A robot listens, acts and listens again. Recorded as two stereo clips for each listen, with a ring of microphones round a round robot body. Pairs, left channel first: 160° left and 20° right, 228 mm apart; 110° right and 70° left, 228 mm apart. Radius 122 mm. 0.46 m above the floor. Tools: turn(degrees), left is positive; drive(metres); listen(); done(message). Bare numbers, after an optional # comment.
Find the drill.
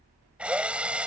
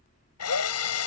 # The drill: 110° right.
turn(-110)
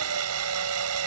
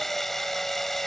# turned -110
# The drill is now 25° right.
turn(-25)
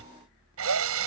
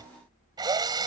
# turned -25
done("Facing the drill.")